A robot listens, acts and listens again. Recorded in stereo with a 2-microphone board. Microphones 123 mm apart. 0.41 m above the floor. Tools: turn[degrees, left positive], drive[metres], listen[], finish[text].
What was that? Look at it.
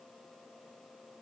Action: listen[]
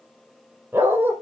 Thought: The dog barking: about 15° right or 165° right.
Action: turn[-15]
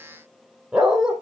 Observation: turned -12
Action: finish[Found it: a dog barking, straight ahead.]